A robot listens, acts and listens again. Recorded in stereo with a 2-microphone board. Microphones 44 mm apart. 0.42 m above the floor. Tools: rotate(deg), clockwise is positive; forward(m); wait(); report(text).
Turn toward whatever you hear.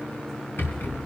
rotate(-60)
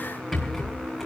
report("Found it: a rattle, straight ahead.")